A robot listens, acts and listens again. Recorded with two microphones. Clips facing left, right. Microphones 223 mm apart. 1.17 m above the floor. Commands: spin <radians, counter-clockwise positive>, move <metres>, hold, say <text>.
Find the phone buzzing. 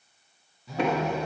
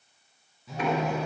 spin 0.52
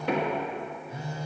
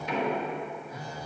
spin 2.62
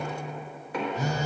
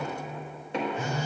spin 0.87
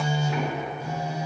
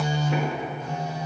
spin 0.17
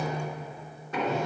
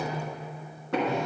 say Found it: a phone buzzing, straight ahead, under 1 m away.